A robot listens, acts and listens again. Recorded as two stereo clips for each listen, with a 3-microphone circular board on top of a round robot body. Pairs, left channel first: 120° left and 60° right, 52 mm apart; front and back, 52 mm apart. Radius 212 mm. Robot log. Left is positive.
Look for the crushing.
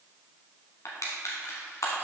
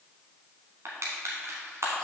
note: The crushing: 145° left.
cmd yaw +145
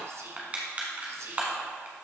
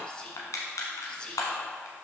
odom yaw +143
end: Facing the crushing, under 1 m away.